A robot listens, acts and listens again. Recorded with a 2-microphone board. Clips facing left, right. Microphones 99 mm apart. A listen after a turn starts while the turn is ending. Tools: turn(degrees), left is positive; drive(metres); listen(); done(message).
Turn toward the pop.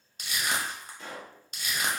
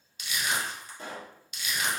turn(degrees=-40)
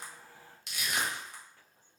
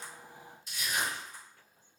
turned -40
listen()
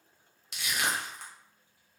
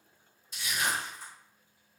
done("I heard a pop, but can't make it out now. It was about straight ahead or 100° right.")